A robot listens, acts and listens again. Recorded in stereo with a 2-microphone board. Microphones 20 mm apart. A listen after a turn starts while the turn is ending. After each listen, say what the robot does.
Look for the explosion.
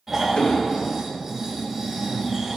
Turn 90° left.
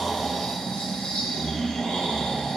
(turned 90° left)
Facing where the explosion came from. I can't hear it now.